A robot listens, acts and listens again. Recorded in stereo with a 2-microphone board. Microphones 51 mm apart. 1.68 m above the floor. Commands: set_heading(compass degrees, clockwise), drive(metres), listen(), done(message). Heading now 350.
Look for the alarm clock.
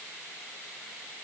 listen()
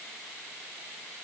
listen()
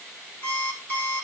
set_heading(315)
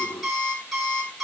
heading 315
done("Facing the alarm clock, over 4 m away.")